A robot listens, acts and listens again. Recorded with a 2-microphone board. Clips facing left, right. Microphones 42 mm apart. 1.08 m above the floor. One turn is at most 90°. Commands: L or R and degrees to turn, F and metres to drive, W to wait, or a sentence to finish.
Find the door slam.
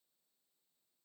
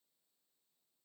W
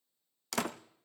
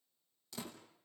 L90
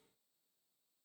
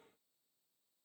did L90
Facing where the door slam came from. I can't hear it now.